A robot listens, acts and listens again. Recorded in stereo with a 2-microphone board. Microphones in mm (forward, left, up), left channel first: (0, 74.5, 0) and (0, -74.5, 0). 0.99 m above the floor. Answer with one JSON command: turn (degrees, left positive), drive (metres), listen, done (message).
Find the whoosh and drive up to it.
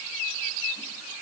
{"listen": true}
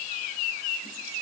{"listen": true}
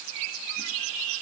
{"done": "I can't make out a whoosh."}